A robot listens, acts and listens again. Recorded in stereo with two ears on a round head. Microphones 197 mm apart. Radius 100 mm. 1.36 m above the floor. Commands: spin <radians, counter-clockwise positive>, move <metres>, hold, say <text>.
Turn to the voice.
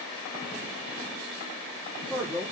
spin -0.52
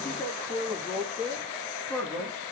say Found it: a man speaking, straight ahead, 2 to 4 m away.